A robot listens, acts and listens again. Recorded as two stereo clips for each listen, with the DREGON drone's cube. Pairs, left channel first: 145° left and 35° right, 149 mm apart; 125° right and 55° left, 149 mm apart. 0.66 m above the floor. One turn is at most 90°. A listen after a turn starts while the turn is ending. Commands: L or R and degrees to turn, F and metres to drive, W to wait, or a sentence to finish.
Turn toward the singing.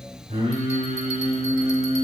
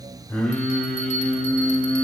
R45
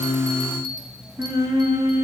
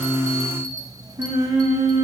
L15
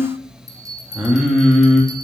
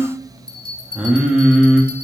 L90
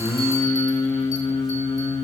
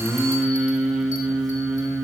L90
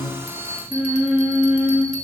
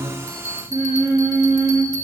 L30
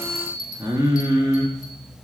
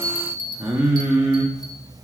Found it: singing, straight ahead, 1 to 2 m away.